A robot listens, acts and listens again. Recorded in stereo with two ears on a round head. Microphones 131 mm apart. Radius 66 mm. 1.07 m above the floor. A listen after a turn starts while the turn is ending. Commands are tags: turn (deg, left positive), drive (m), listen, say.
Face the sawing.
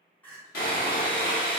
<turn deg="70"/>
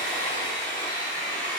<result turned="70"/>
<turn deg="20"/>
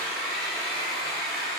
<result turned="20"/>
<say>Facing the sawing.</say>